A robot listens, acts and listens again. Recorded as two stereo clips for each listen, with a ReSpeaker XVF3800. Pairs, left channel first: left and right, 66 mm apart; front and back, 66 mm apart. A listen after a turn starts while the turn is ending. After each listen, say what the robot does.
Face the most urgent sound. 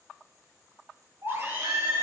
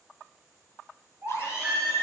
Turn 120° right.
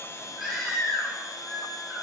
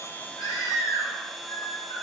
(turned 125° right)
Found it: a baby crying, straight ahead.